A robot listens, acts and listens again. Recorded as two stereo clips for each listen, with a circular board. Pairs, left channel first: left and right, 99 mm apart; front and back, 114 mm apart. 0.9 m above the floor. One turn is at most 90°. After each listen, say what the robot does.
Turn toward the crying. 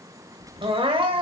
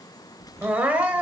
Turn 90° right.
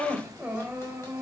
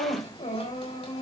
Turn 15° right.
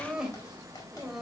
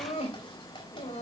Found it: crying, straight ahead.